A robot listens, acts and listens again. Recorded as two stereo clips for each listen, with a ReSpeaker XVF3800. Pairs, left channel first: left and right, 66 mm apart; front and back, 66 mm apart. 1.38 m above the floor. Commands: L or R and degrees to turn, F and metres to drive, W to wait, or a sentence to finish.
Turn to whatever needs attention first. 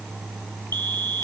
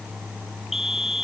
R95
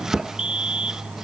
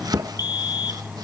R15
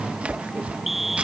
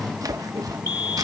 Found it: a fire alarm, straight ahead.